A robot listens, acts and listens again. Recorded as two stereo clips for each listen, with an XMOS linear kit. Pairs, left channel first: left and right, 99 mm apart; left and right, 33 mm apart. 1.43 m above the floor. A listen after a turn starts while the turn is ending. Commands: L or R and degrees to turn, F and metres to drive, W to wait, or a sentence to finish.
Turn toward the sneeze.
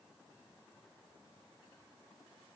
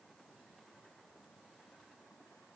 W
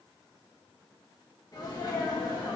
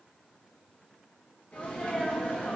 L45
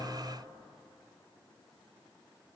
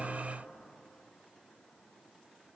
W
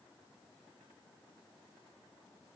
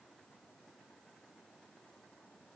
I heard a sneeze, but can't make it out now. It was about straight ahead or 90° left.